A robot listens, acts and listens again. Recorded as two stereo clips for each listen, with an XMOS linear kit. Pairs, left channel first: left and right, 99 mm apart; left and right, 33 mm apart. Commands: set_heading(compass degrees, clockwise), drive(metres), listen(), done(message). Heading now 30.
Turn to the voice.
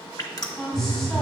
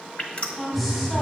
set_heading(0)
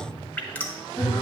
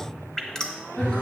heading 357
listen()
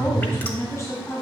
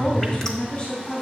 set_heading(212)
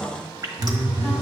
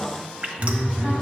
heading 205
set_heading(215)
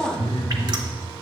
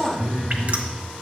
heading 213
listen()
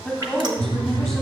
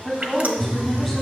done("Facing the woman speaking.")